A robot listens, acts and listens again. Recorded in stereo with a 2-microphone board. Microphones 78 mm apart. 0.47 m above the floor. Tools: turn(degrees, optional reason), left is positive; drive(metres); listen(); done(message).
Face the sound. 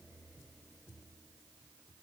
listen()
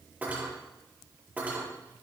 turn(degrees=-25, reason="The cutlery clinking: about 25° right or 155° right.")
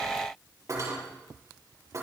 turn(degrees=-130, reason="So it is at 130° right.")
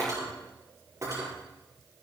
turn(degrees=-40, reason="The cutlery clinking is now 40° right.")
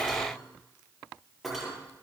done("Found it: cutlery clinking, straight ahead.")